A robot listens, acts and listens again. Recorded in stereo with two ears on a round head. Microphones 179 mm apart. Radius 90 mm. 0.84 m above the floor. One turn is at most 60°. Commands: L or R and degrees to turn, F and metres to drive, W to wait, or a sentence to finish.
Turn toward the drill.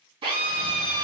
R30
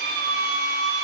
R60
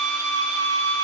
R60
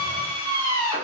R20
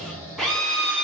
Facing the drill.